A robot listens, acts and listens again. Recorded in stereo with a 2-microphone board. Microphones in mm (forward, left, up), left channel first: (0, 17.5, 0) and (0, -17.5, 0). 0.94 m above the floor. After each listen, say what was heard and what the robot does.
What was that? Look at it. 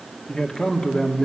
The man speaking: about 20° left or 160° left. Turn 20° left.
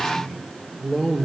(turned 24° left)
Facing the man speaking.